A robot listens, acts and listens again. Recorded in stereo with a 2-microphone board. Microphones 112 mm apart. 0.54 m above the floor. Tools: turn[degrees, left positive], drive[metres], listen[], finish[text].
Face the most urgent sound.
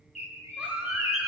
Action: turn[-30]
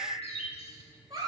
Thought: So it is at 135° right.
Action: turn[-135]
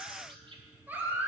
Thought: The baby crying is now 15° right.
Action: turn[-15]
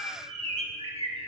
Action: listen[]
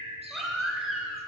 Action: finish[Found it: a baby crying, straight ahead, 1 to 2 m away.]